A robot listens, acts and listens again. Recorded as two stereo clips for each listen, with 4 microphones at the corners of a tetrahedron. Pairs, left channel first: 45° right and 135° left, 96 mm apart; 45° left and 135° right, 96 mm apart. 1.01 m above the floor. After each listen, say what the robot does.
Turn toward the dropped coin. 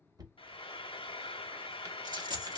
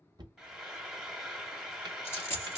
Turn 100° left.
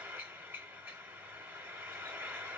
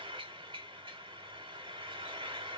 I heard a dropped coin from this way, but can't make it out now.